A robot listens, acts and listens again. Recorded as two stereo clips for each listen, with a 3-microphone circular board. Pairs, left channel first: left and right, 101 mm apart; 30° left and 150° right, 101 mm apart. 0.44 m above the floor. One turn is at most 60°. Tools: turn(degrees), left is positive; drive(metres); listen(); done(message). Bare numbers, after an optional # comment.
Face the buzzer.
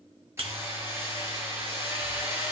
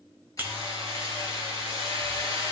# The buzzer: 80° right.
turn(-60)
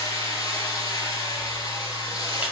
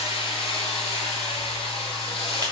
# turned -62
# Nothing new. It was at 15° right.
turn(-15)
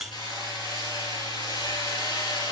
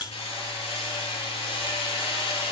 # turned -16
done("Facing the buzzer, 1 to 2 m away.")